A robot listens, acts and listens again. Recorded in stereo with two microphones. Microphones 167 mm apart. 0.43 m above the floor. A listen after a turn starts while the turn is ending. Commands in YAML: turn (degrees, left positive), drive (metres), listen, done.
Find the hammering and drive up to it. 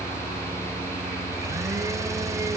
listen: true
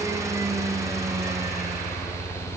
listen: true
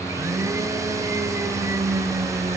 done: "I can't make out hammering, only a blender."